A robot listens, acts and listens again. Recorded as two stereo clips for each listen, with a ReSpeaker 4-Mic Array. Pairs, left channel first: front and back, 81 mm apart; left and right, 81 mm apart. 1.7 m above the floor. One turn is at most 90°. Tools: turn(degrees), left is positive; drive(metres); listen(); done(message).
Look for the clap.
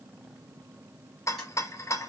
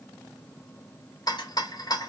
listen()
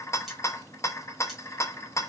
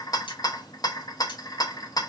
listen()
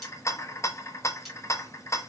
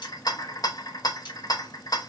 done("I can't make out a clap to turn to.")